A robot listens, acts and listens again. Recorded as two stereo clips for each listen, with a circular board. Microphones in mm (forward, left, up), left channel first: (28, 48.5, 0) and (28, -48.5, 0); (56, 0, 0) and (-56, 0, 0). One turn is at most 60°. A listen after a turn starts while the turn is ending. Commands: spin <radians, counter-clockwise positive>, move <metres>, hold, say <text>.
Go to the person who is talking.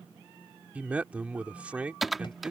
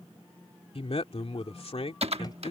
spin -0.26
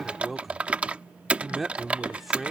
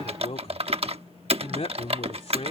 move 1.0
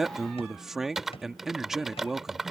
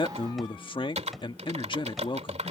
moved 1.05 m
move 1.0
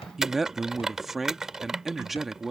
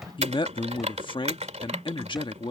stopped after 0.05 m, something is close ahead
say I am next to the man speaking.